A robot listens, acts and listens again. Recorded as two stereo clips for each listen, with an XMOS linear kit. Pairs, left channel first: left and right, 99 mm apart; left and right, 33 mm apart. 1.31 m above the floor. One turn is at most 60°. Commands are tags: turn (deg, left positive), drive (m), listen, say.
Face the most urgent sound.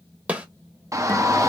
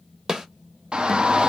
<turn deg="-35"/>
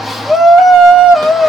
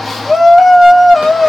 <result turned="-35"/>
<say>Facing the shout.</say>